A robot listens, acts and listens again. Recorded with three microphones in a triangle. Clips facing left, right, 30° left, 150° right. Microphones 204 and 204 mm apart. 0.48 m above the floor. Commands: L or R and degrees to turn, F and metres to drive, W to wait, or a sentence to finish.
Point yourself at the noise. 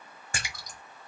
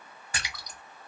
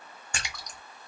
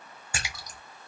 L130
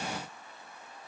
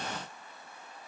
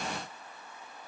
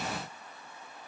Facing where the splash came from. I can't hear it now.